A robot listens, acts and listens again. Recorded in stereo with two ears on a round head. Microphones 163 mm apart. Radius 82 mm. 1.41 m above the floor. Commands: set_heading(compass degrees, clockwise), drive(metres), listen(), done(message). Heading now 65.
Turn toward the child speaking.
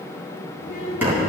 set_heading(35)
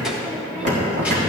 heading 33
listen()
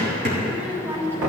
set_heading(43)
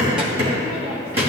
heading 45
listen()
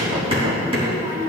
set_heading(65)
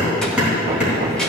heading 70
listen()
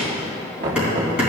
listen()
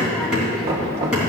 done("Facing where the child speaking came from. I can't hear it now.")